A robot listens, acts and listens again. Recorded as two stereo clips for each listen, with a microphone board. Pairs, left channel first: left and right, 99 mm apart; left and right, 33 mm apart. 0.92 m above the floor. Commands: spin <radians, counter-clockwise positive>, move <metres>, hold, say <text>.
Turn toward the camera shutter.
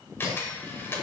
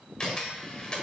spin 0.35
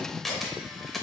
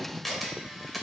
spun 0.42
say Found it: a camera shutter, straight ahead, 1 to 2 m away.